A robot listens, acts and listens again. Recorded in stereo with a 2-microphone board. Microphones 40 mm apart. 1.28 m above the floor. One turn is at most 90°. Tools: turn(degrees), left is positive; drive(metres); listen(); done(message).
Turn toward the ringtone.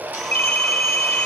turn(degrees=55)
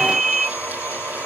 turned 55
turn(degrees=15)
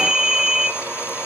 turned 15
done("Facing the ringtone.")